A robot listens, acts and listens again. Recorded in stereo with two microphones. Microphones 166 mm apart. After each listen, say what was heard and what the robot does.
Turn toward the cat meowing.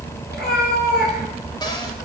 Keep listening.
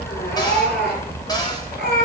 The cat meowing: about 75° left or 105° left. Turn 75° left.
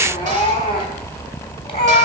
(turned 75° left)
So it is at 35° left. Turn 35° left.
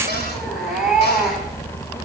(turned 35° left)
Facing the cat meowing, 2 to 4 m away.